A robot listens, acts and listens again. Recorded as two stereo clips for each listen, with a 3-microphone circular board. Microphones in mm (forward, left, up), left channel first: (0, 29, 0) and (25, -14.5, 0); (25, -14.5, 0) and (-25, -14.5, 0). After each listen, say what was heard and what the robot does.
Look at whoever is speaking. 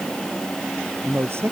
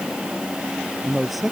The man speaking: 90° right. Turn 90° right.
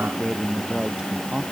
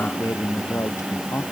The man speaking is now 15° left. Turn 15° left.
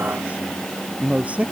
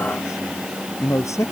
Found it: a man speaking, straight ahead.